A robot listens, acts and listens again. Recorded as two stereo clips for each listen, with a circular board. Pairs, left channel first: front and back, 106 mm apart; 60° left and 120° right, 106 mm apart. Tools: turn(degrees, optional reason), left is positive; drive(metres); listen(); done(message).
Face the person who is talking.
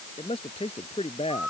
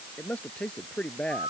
turn(degrees=-20, reason="The man speaking: 20° right.")
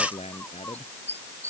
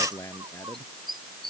done("Facing the man speaking.")